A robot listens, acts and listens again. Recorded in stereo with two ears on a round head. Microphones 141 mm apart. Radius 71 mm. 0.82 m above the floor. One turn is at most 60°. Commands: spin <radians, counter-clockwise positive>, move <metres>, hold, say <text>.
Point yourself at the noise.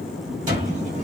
spin -0.87
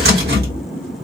spin -1.05
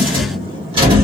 spin -0.61
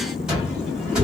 say Facing the cupboard door, 1 to 2 m away.